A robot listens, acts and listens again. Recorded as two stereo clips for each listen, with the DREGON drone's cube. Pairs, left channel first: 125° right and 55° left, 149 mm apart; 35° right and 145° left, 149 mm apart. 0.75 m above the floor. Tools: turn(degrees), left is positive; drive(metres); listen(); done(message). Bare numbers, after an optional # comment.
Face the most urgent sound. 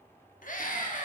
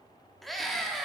# The scream: 120° right.
turn(-120)
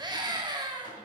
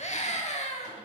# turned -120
done("Found it: a scream, straight ahead.")